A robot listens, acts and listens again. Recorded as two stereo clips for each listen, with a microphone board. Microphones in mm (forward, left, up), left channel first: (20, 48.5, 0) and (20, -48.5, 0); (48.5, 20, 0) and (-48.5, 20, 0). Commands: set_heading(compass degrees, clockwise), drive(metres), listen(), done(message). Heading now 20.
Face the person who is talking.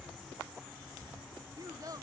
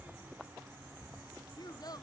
set_heading(60)
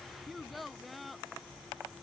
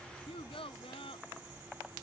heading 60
done("Facing the child speaking.")